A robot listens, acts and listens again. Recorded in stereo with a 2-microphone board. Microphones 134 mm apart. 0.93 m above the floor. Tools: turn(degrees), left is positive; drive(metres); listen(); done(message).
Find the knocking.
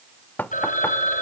turn(degrees=30)
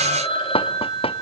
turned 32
turn(degrees=135)
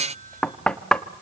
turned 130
done("Facing the knocking, 1 to 2 m away.")